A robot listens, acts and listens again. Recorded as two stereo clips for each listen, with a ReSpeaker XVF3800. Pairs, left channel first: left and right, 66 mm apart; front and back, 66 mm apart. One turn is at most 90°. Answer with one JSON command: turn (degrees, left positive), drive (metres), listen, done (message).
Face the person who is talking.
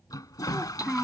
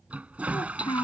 {"done": "Facing the child speaking."}